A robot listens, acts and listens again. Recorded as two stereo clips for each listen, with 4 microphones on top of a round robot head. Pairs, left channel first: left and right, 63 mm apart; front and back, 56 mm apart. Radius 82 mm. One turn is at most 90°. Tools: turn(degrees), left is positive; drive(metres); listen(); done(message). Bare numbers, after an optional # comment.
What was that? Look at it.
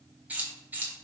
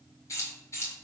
# The keys jangling: 30° right.
turn(-30)
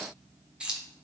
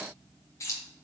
# The keys jangling is now 20° right.
turn(-20)
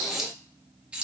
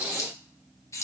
# The keys jangling is now 20° right.
turn(-20)
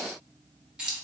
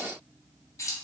# The keys jangling is now 15° right.
turn(-15)
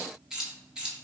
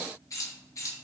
# The keys jangling is now 15° right.
turn(-15)
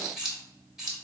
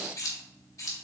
# The keys jangling is now 10° right.
turn(-10)
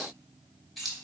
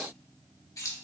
done("Found it: keys jangling, straight ahead, 1 to 2 m away.")